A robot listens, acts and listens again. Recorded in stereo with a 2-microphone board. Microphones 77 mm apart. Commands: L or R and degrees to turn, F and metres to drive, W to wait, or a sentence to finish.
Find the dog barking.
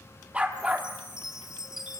R30
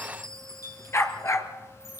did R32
L40
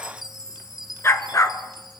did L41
L45
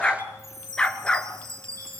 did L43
L10
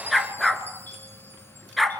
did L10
Found it: a dog barking, straight ahead, 1 to 2 m away.